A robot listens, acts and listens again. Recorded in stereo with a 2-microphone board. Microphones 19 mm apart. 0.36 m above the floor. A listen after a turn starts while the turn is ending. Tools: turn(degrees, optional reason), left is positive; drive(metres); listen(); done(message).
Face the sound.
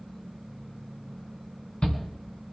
turn(degrees=65, reason="The shout: about 65° left or 115° left.")
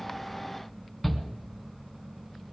done("Facing the shout, 2 to 4 m away.")